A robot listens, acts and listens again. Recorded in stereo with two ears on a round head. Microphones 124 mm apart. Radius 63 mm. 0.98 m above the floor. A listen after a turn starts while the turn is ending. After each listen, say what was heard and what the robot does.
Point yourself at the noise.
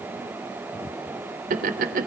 The laughter: about 65° right or 115° right. Turn 65° right.
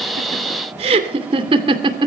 So it is at 30° right. Turn 30° right.
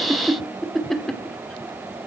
Found it: laughter, straight ahead.